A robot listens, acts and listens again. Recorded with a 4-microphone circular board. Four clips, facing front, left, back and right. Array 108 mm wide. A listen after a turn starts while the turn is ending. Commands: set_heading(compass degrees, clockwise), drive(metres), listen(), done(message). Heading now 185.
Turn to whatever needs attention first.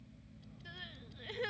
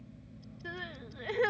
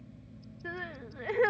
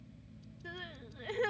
set_heading(20)
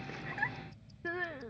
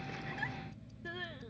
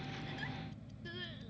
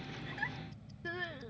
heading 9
set_heading(19)
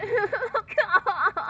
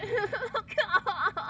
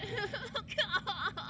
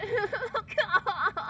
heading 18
done("Facing the crying.")